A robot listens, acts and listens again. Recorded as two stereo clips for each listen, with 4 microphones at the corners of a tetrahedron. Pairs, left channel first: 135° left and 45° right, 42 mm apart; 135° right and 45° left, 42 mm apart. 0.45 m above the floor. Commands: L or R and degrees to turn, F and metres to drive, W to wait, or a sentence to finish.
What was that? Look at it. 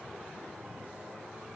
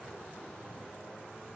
W
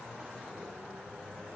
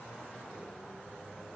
W
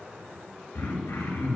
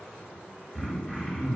L135
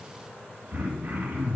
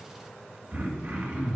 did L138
Facing the throat clearing, 2 to 4 m away.